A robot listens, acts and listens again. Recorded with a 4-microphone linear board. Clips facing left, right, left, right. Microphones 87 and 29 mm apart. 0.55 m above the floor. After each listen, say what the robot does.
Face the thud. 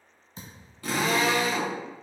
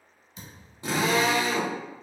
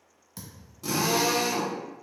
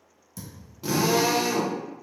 Turn 40° left.
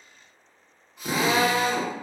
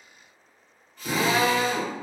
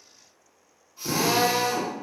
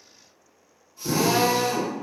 Keep listening.
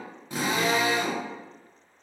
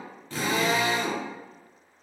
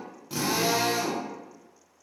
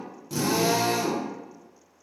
I heard a thud, but can't make it out now. It was about straight ahead or 100° left.